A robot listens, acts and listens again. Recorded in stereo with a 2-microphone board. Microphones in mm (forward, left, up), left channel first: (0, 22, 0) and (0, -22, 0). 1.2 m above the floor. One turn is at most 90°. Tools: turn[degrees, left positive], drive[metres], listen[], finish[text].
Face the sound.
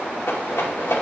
Action: turn[90]
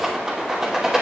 Thought: So it is at 15° right.
Action: turn[-15]
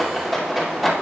Action: finish[Found it: a rattle, straight ahead.]